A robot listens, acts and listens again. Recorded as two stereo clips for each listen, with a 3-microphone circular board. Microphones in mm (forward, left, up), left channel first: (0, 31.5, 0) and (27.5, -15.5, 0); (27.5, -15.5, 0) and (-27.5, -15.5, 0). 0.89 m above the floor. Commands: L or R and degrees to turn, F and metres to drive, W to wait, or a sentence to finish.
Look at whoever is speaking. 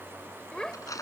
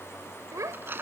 R165
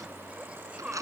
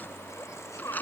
L10
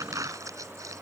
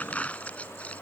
W
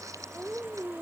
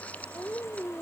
Facing the child speaking.